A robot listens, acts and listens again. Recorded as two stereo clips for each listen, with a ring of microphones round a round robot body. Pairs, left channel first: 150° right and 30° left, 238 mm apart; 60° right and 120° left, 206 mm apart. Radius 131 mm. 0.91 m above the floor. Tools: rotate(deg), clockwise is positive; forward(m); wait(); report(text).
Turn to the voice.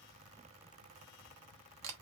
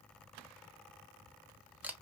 wait()
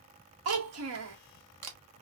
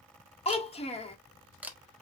report("Found it: a child speaking, straight ahead, 1 to 2 m away.")